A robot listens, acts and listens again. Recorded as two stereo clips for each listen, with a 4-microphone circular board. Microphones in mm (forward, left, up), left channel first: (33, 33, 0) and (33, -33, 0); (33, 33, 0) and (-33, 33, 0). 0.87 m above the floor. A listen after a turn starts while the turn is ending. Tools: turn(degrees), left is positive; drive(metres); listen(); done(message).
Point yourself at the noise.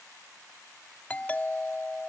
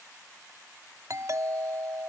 turn(degrees=155)
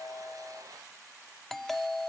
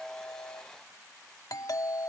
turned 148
done("Found it: a doorbell, straight ahead.")